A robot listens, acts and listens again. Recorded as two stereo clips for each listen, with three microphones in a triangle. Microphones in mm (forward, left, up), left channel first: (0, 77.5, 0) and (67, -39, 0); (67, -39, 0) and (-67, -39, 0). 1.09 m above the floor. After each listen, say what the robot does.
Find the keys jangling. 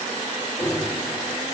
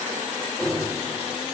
Turn 90° left.
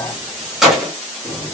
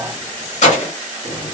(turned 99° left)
Turn 35° left.
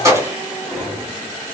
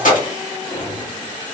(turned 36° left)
Turn 15° left.
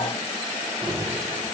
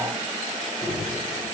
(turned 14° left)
Turn 15° left.
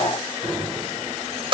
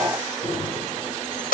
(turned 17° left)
Found it: keys jangling, straight ahead, 1 to 2 m away.